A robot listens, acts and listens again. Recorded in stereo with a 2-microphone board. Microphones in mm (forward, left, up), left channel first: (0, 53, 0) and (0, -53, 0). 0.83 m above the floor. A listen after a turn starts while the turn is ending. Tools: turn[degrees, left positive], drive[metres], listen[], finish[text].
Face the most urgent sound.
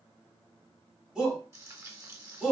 Action: turn[-30]
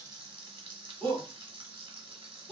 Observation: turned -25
Thought: So it is at 15° left.
Action: turn[15]
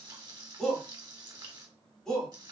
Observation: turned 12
Action: finish[Found it: a shout, straight ahead, 1 to 2 m away.]